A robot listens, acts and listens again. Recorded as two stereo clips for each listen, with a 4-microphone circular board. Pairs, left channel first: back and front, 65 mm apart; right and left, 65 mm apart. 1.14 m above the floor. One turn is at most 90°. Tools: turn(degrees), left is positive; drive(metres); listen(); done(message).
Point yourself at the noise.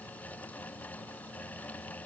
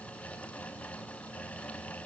listen()
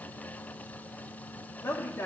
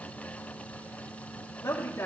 turn(degrees=-90)
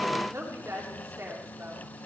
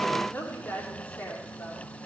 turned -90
turn(degrees=-35)
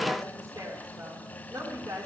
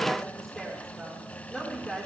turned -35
done("Found it: a woman speaking, straight ahead.")